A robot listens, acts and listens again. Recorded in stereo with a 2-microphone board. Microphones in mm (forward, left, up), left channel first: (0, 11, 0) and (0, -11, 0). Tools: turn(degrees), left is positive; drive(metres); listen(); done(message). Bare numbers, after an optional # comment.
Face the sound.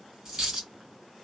# The dropped coin: about 25° right or 155° right.
turn(-25)
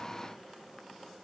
listen()
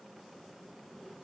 done("I heard a dropped coin, but can't make it out now. It was about straight ahead or 130° right.")